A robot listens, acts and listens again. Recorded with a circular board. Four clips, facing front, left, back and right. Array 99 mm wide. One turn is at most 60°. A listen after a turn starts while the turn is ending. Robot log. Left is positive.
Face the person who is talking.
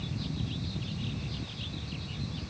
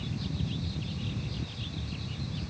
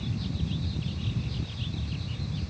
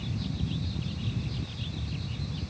cmd idle
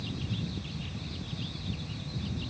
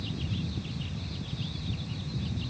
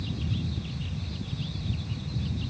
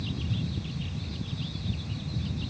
cmd idle
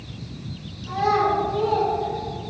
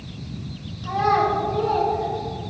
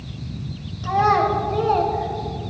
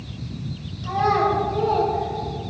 note: The child speaking: 175° left.
cmd yaw +60
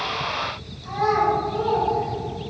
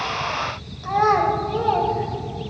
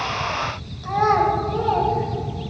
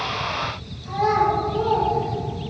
note: The child speaking is now 120° left.
cmd yaw +60
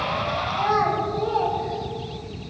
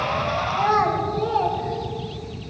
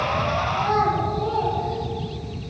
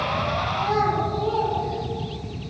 note: The child speaking is now 70° left.
cmd yaw +60
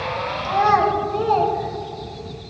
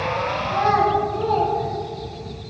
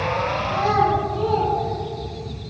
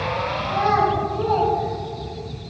end: Facing the child speaking, 2 to 4 m away.